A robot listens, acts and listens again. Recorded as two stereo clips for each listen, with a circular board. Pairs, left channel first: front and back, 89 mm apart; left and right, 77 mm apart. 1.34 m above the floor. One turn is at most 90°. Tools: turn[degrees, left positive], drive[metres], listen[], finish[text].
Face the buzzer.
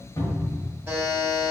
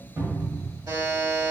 Thought: The buzzer: 115° right.
Action: turn[-90]
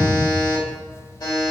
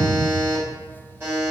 Thought: The buzzer is now 35° right.
Action: turn[-35]
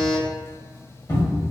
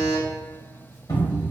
Thought: The buzzer is now 20° right.
Action: turn[-20]
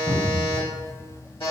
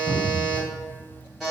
Action: finish[Facing the buzzer, 1 to 2 m away.]